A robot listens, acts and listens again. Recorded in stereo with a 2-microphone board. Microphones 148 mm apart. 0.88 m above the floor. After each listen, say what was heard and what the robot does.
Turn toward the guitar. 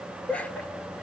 Keep listening.
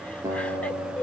The guitar: about 20° right or 160° right. Turn 20° right.
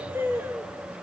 Keep listening.
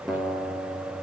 Facing the guitar.